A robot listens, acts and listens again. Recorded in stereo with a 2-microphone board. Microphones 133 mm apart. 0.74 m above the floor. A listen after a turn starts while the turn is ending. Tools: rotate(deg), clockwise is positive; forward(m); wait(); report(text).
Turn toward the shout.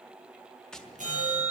wait()
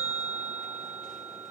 wait()
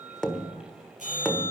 report("I can't make out a shout, only a bell and tapping.")